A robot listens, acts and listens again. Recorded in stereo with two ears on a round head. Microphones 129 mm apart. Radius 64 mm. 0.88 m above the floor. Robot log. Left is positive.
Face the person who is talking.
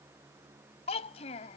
note: The child speaking: about 45° left or 135° left.
cmd yaw +45
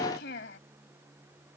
note: So it is at 90° left.
cmd yaw +90
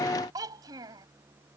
note: The child speaking is now 25° right.
cmd yaw -25
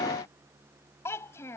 note: The child speaking is now 20° left.
cmd yaw +20
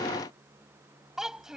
end: Facing the child speaking.